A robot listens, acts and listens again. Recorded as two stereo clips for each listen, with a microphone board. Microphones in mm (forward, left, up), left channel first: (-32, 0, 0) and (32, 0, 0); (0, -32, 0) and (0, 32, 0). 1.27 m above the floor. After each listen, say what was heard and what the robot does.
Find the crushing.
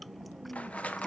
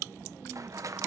The crushing: 115° left. Turn 115° left.
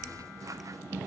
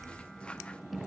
Keep listening.
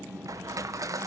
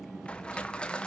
The crushing is now 20° right. Turn 20° right.
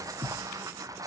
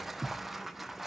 Facing the crushing.